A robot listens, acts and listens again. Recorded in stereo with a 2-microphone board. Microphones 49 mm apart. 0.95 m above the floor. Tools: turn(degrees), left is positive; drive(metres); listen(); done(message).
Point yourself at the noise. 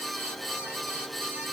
listen()
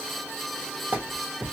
turn(degrees=-35)
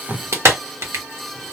turn(degrees=-110)
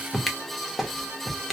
done("Facing the clap.")